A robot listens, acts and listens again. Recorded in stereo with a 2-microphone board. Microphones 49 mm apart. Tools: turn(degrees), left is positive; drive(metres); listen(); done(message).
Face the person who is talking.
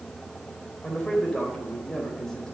turn(degrees=30)
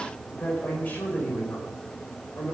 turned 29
turn(degrees=155)
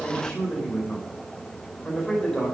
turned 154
turn(degrees=10)
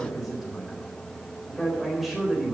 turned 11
done("Found it: a man speaking, straight ahead.")